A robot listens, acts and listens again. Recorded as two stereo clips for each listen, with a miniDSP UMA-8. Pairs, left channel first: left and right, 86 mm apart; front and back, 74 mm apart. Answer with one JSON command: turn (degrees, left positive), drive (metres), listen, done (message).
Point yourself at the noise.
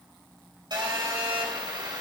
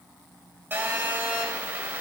{"turn": -120}
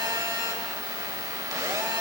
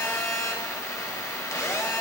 {"turn": -45}
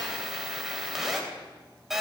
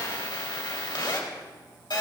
{"done": "Facing the phone buzzing."}